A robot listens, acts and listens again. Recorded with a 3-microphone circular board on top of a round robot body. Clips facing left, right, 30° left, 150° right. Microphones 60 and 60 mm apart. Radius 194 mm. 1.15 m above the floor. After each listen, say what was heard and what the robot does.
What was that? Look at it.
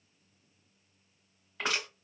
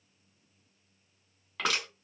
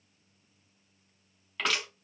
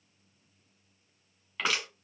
The crushing: 65° right. Turn 65° right.
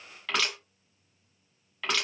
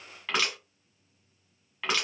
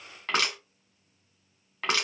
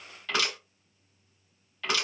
The crushing is now 10° right. Turn 10° right.
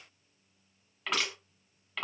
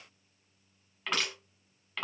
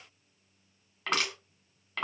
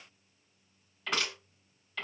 Found it: crushing, straight ahead.